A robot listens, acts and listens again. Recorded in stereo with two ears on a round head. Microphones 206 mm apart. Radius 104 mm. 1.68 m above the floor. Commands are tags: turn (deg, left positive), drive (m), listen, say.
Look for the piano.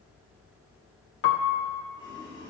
<turn deg="55"/>
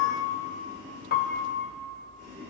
<turn deg="50"/>
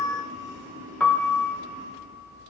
<turn deg="10"/>
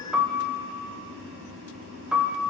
<say>Found it: a piano, straight ahead, 1 to 2 m away.</say>